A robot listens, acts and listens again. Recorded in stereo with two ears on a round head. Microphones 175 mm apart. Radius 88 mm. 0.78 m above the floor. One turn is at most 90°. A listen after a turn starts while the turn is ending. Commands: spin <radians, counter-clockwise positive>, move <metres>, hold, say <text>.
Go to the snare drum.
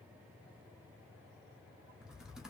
hold
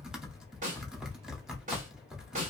spin -0.70
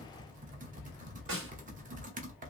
spin -1.57
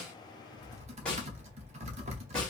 move 1.0
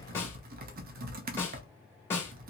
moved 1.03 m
spin 0.26
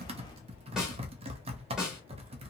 move 1.0
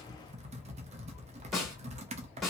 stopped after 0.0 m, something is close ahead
say Arrived at the snare drum, straight ahead.